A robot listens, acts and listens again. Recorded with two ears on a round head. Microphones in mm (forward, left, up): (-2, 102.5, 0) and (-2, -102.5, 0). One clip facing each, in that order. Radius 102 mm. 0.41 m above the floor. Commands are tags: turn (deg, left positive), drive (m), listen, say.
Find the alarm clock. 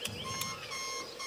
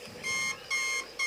<turn deg="-90"/>
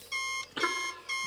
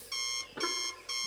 <say>Facing the alarm clock.</say>